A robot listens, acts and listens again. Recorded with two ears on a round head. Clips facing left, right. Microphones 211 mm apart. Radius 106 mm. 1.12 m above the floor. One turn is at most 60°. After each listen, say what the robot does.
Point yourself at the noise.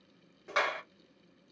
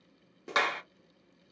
Turn 55° right.
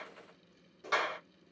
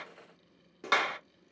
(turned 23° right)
Turn 60° right.
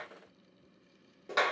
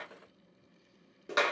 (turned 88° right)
Turn 15° right.
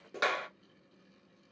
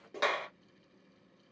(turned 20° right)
Found it: a clap, straight ahead.